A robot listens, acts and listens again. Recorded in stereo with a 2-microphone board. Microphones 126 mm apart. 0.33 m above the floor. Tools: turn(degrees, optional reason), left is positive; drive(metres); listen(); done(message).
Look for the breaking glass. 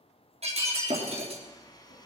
turn(degrees=-55, reason="The breaking glass: about 55° right or 125° right.")
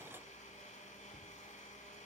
listen()
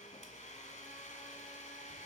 done("I heard breaking glass, but can't make it out now. It was about straight ahead or 70° right.")